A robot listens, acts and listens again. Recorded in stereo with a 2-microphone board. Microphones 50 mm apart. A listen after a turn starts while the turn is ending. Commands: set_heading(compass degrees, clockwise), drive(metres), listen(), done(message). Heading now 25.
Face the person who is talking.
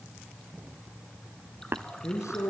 set_heading(295)
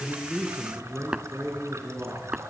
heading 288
set_heading(308)
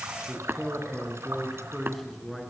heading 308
done("Found it: a man speaking, straight ahead.")